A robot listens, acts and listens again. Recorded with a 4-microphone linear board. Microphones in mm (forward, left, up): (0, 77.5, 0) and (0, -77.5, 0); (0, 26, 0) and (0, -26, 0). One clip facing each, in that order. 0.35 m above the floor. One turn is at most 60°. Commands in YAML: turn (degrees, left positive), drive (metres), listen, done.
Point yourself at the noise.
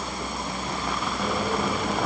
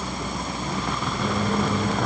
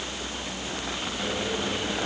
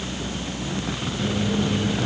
turn: 30
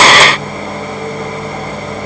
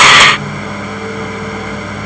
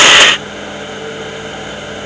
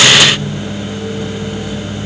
turn: 60
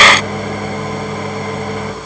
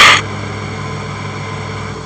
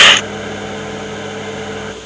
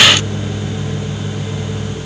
turn: 60
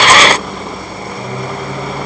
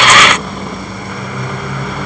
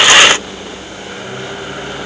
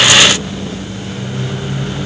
turn: 40
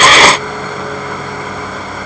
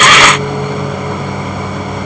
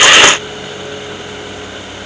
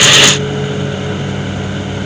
turn: -20
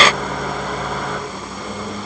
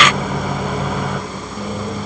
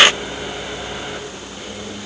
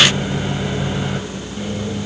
done: "Found it: a microwave, straight ahead."